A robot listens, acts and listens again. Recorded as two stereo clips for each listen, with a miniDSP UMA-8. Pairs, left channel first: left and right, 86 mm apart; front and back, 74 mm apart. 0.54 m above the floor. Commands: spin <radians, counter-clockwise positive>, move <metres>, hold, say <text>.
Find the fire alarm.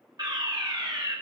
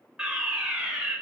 spin -1.83
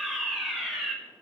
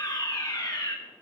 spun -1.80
say Found it: a fire alarm, straight ahead, 2 to 4 m away.